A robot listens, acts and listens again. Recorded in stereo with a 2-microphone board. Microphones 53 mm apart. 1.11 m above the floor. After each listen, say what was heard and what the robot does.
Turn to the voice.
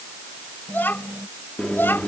The child speaking: about 40° left or 140° left. Turn 40° left.
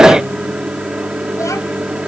Keep listening.
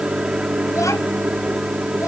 Keep listening.
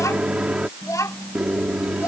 So it is at 95° left. Turn 95° left.
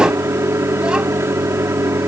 Keep listening.
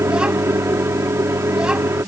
The child speaking is now 15° right. Turn 15° right.
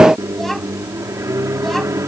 Keep listening.
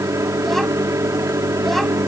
Keep listening.
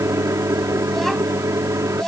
Found it: a child speaking, straight ahead.